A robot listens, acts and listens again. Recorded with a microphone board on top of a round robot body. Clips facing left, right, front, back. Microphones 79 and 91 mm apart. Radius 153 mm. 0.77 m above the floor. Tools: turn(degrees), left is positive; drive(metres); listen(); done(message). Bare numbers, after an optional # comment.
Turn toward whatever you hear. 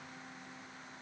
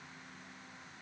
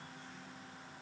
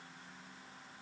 listen()
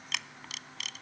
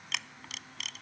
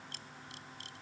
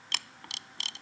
# The camera shutter: straight behind.
turn(180)
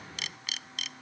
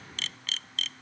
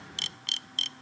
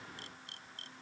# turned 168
# The camera shutter is now 10° left.
turn(10)
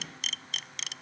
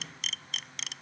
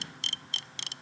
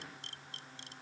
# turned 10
done("Found it: a camera shutter, straight ahead.")